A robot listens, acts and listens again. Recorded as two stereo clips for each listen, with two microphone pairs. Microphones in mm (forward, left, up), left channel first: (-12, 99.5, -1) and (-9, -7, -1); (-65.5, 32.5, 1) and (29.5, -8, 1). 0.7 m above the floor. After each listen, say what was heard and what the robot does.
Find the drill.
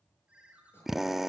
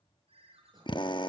The drill: straight behind. Turn 180° left.
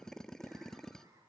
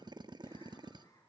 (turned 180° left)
The drill is now 10° left. Turn 10° left.
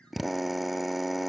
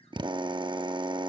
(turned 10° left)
Found it: a drill, straight ahead.